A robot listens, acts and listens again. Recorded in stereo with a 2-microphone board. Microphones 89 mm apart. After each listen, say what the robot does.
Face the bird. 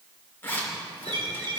Turn 65° right.
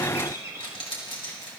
Turn 35° right.
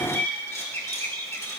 Turn 20° left.
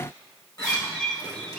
Found it: a bird, straight ahead, 2 to 4 m away.